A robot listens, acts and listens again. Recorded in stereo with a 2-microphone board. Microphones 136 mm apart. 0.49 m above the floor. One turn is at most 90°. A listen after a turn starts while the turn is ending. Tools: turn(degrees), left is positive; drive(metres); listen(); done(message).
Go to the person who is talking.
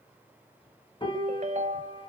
listen()
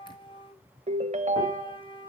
listen()
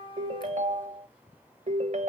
done("I can't make out anyone speaking, only a piano and a ringtone.")